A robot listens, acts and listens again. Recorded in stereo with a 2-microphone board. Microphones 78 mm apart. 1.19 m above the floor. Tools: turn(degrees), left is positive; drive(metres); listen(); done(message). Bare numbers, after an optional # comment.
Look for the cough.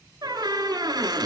listen()
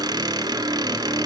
listen()
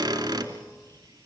done("I can't make out a cough, only a squeak.")